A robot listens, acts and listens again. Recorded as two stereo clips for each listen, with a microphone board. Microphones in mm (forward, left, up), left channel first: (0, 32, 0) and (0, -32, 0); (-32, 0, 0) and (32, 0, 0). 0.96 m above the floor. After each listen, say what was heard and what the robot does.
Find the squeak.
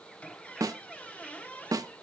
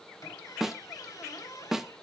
The squeak: 160° left. Turn 160° left.
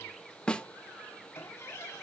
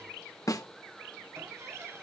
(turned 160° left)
The squeak is now 45° left. Turn 45° left.
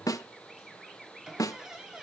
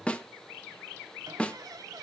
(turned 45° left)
The squeak is now 10° right. Turn 10° right.
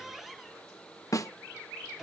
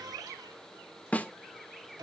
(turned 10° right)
Found it: a squeak, straight ahead.